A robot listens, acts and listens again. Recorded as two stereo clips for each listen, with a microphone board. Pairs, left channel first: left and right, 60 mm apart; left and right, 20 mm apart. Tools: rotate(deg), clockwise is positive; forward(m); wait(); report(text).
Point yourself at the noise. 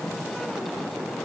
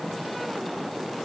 wait()
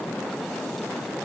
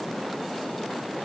wait()
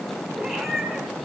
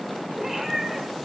rotate(-30)
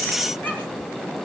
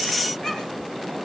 wait()
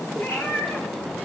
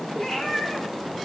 rotate(-140)
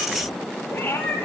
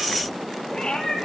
rotate(-35)
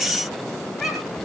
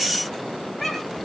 report("Facing the cat meowing, 2 to 4 m away.")